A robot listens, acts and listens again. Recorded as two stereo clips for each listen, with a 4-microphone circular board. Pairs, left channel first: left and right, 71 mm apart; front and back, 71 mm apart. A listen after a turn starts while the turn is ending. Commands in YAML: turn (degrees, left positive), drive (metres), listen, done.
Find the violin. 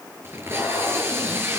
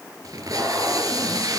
listen: true
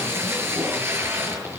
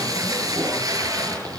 listen: true
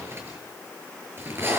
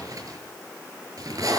done: "I can't make out a violin, only tape being pulled."